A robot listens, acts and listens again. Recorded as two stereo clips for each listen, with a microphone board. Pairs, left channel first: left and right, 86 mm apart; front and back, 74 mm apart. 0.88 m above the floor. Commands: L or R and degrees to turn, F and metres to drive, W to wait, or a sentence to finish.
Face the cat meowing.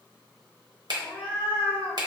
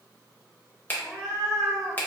L80
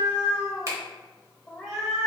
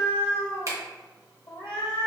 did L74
Found it: a cat meowing, straight ahead, 1 to 2 m away.